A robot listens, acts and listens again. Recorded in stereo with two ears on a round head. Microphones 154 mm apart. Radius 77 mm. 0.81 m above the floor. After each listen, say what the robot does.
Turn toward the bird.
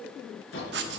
Turn 90° left.
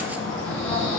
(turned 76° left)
Found it: a bird, straight ahead, over 4 m away.